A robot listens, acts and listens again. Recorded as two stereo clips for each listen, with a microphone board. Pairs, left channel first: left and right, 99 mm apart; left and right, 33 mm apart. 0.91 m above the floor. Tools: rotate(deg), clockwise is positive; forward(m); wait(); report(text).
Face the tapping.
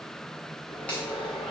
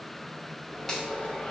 wait()
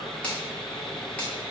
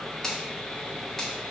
wait()
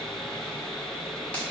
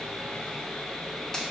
report("I can't make out tapping, only sawing and a finger snap.")